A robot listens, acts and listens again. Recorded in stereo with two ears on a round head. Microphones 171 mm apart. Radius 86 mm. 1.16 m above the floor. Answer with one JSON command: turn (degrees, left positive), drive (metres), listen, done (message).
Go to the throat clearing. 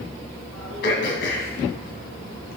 {"turn": 55}
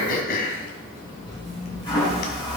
{"turn": 55}
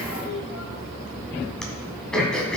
{"drive": 1.0}
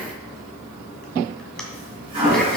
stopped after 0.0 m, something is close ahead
{"listen": true}
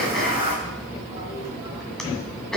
{"done": "Something is in my way. I am facing the throat clearing but have not reached it."}